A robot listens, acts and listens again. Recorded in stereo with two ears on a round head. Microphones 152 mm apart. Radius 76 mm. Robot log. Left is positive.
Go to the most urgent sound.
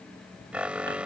cmd yaw -30
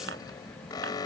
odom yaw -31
note: So it is at 25° left.
cmd yaw +25
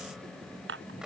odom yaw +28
cmd idle
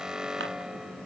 cmd fwd 1.0
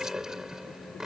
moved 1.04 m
cmd fwd 1.0
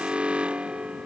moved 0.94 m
note: The alarm is now 10° right.
cmd yaw -10
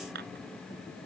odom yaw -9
cmd idle
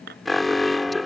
cmd fwd 1.0
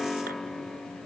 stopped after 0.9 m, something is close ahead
end: Arrived at the alarm, straight ahead.